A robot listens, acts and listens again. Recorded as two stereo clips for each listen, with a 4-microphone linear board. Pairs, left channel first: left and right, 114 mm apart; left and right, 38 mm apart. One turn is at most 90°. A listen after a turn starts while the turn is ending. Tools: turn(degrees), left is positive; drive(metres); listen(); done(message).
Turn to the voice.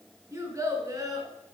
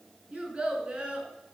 turn(degrees=-30)
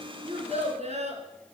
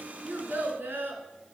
turn(degrees=-90)
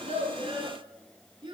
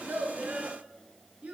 turn(degrees=-40)
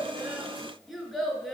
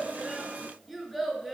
done("Found it: a child speaking, straight ahead.")